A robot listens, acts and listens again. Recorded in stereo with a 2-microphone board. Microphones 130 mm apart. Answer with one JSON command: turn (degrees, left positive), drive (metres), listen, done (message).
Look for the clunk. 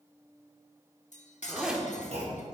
{"turn": -60}
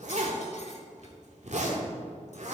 {"listen": true}
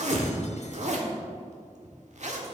{"done": "I heard a clunk, but can't make it out now. It was about straight ahead or 60° right."}